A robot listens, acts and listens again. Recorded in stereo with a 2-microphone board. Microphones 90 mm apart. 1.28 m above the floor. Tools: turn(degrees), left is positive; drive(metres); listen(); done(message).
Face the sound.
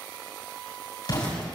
turn(degrees=50)
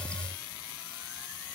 listen()
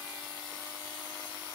done("I heard an explosion, but can't make it out now. It was about straight ahead or 80° left.")